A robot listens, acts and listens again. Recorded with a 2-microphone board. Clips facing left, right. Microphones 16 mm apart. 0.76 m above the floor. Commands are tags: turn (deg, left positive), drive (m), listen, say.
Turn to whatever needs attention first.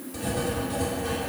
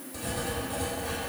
<listen/>
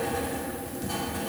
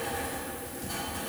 <listen/>
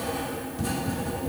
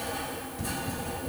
<say>I can't make out anything urgent, only writing.</say>